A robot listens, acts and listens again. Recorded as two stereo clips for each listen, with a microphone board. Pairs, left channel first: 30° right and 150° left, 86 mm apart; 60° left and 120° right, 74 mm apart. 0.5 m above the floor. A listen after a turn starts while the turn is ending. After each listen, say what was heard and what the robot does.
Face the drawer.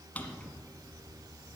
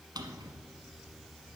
The drawer: 105° right. Turn 105° right.
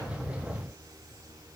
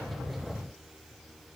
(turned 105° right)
Keep listening.
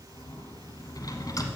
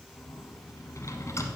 The drawer is now 15° left. Turn 15° left.
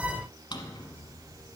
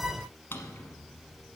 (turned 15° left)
Found it: a drawer, straight ahead, 1 to 2 m away.